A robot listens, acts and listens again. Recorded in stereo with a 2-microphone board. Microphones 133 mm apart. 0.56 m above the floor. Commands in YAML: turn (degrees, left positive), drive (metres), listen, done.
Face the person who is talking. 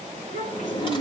turn: 90
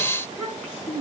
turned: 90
done: "Facing the child speaking."